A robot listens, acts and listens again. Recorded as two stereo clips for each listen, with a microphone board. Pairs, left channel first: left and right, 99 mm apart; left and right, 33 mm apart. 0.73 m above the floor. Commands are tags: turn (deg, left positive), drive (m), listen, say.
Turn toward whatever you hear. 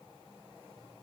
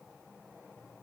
<listen/>
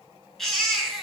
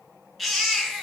<turn deg="30"/>
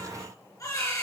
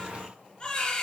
<turn deg="145"/>
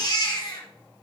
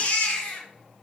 <turn deg="45"/>
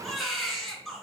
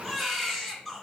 <say>Found it: a baby crying, straight ahead.</say>